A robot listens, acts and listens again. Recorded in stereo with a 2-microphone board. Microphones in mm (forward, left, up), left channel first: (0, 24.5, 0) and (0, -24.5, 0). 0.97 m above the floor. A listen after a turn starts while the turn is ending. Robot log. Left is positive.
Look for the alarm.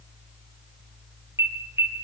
note: The alarm: about 60° right or 120° right.
cmd yaw -60
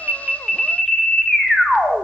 end: Found it: an alarm, straight ahead.